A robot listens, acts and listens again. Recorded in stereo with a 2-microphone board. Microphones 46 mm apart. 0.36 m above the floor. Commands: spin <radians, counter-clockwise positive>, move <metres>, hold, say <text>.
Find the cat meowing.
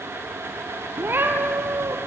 spin -0.96
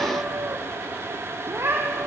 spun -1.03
spin -0.87
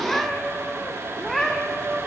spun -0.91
spin 0.17
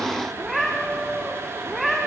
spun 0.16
say Found it: a cat meowing, straight ahead, over 4 m away.